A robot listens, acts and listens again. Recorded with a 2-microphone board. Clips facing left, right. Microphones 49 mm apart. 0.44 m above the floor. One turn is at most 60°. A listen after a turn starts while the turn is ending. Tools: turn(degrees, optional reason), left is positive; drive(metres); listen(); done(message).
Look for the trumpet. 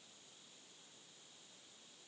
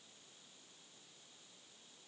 listen()
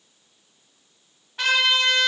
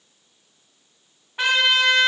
turn(degrees=-20, reason="The trumpet: about 20° right or 160° right.")
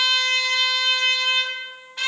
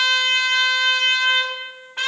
turn(degrees=-60, reason="So it is at 140° right.")
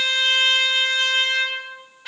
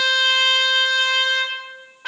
turn(degrees=-60, reason="The trumpet is now 80° right.")
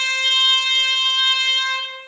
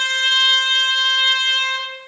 turn(degrees=-30, reason="The trumpet is now 30° right.")
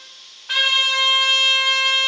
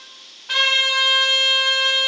done("Found it: a trumpet, straight ahead, under 1 m away.")